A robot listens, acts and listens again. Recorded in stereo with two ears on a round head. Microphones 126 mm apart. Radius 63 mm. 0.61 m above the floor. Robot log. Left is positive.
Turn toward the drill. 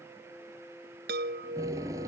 note: The drill: about 20° right or 160° right.
cmd yaw -20
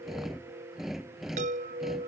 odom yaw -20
end: Facing the drill.